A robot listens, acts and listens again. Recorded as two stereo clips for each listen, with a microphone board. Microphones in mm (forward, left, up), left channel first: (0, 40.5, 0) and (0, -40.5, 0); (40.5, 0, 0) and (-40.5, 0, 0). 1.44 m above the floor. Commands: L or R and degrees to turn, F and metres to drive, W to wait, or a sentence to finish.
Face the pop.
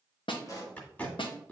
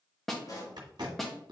L40
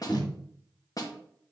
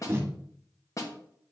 Facing where the pop came from. I can't hear it now.